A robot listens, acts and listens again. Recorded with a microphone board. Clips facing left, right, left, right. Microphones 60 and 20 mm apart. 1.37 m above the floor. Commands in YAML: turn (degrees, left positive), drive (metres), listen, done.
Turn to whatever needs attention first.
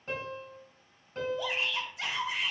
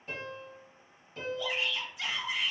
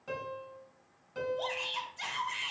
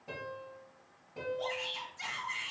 turn: 55
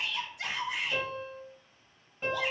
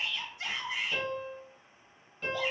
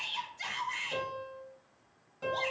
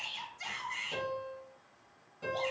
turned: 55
turn: 70
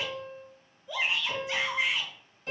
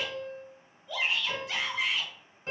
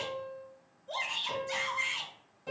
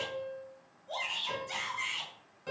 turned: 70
turn: 10
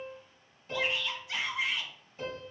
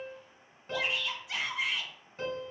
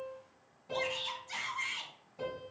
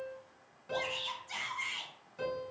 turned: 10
done: "Found it: a shout, straight ahead."